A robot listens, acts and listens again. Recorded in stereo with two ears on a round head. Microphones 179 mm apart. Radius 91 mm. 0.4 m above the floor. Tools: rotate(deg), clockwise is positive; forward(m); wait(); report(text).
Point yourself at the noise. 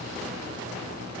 wait()
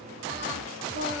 rotate(40)
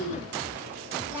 rotate(10)
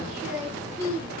rotate(10)
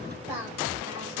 rotate(10)
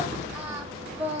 rotate(10)
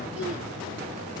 wait()
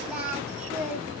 report("Facing the singing.")